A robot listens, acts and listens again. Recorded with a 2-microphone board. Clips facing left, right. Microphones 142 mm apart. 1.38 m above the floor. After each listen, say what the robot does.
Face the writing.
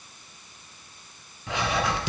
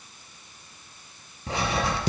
Turn 40° right.
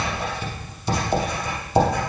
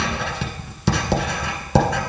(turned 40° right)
Turn 95° right.
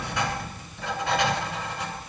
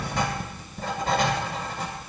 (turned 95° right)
Turn 35° right.
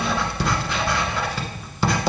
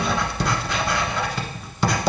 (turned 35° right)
Found it: writing, straight ahead.